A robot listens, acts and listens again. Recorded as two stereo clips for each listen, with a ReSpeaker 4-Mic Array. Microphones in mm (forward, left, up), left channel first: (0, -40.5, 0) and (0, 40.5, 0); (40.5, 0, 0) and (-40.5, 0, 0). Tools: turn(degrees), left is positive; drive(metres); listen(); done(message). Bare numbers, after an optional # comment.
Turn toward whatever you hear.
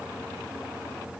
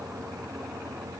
listen()
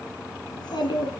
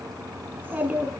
# The child speaking: 110° right.
turn(-110)
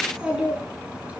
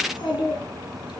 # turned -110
# The child speaking is now 15° left.
turn(15)
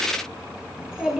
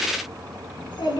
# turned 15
# The child speaking is now 10° left.
turn(10)
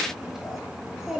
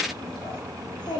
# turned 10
done("Found it: a child speaking, straight ahead, over 4 m away.")